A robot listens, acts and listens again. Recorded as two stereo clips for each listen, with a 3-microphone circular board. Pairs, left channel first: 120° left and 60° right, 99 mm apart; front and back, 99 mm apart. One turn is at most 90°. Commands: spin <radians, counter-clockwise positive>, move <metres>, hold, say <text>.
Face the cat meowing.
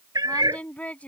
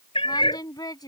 spin -0.26
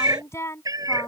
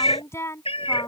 spin -0.26
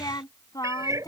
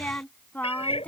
say Facing the cat meowing.